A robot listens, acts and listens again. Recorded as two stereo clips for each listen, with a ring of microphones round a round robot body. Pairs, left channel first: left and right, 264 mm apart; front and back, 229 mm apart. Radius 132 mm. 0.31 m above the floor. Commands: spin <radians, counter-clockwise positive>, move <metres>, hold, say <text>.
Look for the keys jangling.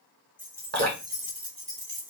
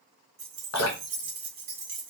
spin -2.44
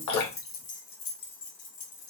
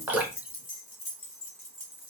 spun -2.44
spin 1.05
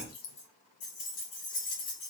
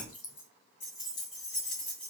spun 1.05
spin 0.61
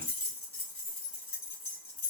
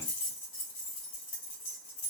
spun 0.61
say Found it: keys jangling, straight ahead.